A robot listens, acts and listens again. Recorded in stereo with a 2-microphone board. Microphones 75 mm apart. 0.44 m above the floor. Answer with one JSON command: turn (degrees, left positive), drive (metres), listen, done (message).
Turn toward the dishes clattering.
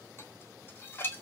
{"turn": 30}
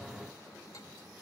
{"listen": true}
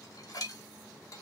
{"turn": 110}
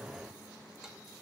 {"listen": true}
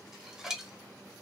{"turn": -10}
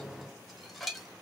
{"done": "Facing the dishes clattering."}